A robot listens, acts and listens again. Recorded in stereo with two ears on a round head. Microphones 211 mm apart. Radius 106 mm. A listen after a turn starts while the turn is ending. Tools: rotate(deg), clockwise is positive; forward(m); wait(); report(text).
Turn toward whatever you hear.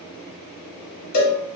rotate(-75)
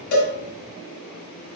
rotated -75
report("Found it: a cowbell, straight ahead, 1 to 2 m away.")